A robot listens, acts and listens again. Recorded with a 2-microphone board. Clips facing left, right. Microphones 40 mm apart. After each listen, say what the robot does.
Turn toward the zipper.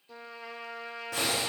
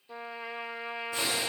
Turn 90° left.
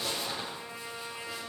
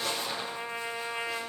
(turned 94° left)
Found it: a zipper, straight ahead.